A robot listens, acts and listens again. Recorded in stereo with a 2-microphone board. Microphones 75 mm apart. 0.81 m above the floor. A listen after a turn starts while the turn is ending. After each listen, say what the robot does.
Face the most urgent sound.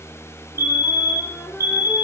Turn 35° right.
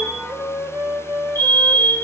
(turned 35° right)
Turn 105° right.
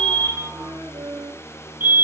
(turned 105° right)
Turn 30° right.
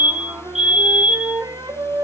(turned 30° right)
Turn 10° right.
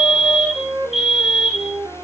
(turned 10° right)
Found it: a fire alarm, straight ahead, 2 to 4 m away.